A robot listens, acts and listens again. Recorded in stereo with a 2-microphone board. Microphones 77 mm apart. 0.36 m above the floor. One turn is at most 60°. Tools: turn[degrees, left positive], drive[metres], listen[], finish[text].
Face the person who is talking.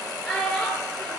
Action: turn[30]
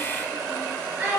Thought: So it is at 20° right.
Action: turn[-20]
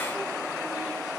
Action: listen[]
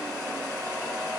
Action: listen[]
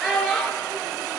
Action: finish[Found it: a child speaking, straight ahead, 2 to 4 m away.]